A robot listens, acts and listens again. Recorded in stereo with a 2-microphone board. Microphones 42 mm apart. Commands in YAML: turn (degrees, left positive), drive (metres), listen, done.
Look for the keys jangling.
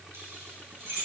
turn: -65
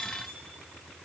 listen: true
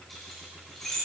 turn: 10
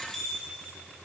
done: "Found it: keys jangling, straight ahead."